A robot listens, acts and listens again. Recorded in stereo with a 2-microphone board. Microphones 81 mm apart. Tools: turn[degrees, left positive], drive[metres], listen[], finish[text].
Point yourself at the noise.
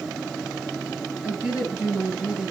Action: turn[-30]
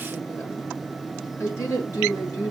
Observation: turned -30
Thought: So it is at 40° left.
Action: turn[40]
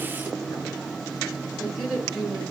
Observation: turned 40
Action: finish[Found it: a woman speaking, straight ahead.]